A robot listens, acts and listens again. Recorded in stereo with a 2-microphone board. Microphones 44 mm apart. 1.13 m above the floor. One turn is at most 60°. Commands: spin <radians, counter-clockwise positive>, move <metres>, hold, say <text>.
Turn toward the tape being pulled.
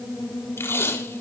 spin 1.05
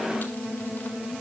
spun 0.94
spin 0.61
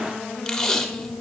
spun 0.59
spin 0.17
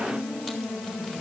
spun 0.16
hold
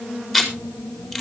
say Facing the tape being pulled, 2 to 4 m away.